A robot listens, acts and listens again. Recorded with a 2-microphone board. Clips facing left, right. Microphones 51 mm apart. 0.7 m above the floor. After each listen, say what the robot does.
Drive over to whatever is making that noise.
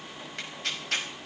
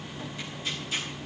Turn 65° left.
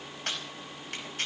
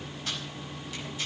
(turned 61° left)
Turn 50° left.
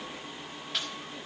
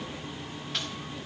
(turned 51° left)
Drive 1.0 m forward.
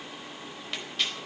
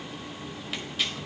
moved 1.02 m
Drive 1.0 m forward.
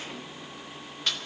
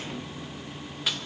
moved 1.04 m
Turn 10° right.
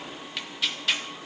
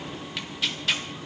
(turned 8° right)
Drive 1.0 m forward.
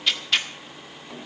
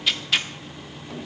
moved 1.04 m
Drive 1.0 m forward.
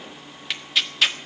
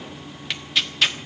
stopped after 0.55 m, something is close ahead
Arrived at the tearing paper, straight ahead.